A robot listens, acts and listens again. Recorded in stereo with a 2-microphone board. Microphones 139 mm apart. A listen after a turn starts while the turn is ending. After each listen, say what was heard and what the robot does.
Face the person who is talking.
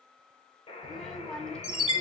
Turn 30° left.
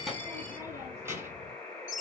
So it is at 20° right. Turn 20° right.
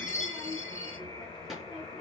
Facing the child speaking, 2 to 4 m away.